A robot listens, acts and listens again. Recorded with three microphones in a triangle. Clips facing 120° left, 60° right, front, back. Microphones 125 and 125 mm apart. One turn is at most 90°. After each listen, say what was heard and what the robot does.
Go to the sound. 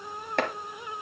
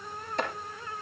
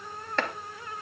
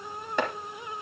The chopping: 105° left. Turn 90° left.
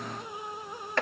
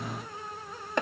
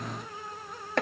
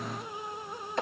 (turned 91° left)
The chopping is now 10° left. Turn 10° left.
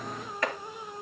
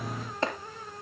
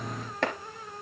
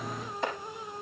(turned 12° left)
Drive 1.0 m forward.
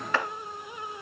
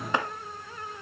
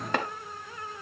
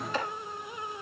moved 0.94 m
The chopping is now 10° left. Turn 10° left.
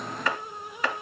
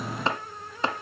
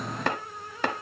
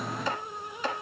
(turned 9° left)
Drive 1.0 m forward.
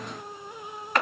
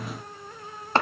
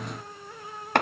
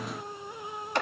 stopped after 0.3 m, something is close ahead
Arrived at the chopping, straight ahead.